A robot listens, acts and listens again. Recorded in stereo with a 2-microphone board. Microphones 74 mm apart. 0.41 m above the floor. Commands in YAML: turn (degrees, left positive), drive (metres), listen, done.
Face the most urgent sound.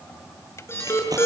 turn: 35
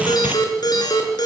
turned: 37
turn: 105
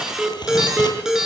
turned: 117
done: "Facing the alarm, over 4 m away."